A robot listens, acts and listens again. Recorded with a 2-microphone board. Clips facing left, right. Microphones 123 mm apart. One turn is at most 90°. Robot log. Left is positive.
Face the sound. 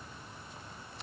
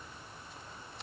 cmd idle
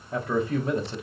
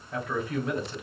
note: The man speaking: about 30° left or 150° left.
cmd yaw +30
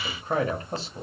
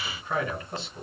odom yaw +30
note: The man speaking: about 35° left or 145° left.
cmd yaw +35
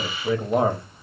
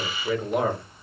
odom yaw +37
note: The man speaking: about 30° left or 150° left.
cmd yaw +30
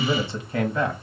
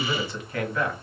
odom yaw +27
note: The man speaking: about 25° left or 155° left.
cmd yaw +25
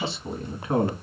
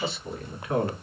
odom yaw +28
note: The man speaking: about 25° left or 155° left.
cmd yaw +25
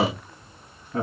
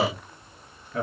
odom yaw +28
note: The man speaking: about 35° left or 145° left.
cmd yaw +35
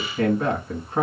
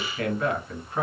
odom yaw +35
note: The man speaking: about 30° left or 150° left.
cmd yaw +30
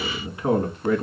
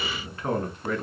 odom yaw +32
note: So it is at 15° left.
cmd yaw +15
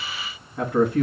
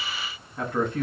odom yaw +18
end: Facing the man speaking, 1 to 2 m away.